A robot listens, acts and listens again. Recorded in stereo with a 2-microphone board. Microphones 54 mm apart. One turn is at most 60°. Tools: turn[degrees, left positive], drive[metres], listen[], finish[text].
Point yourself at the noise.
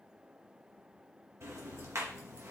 Thought: The ticking: about 60° right or 120° right.
Action: turn[-60]
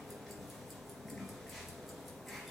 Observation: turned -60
Action: finish[Facing the ticking.]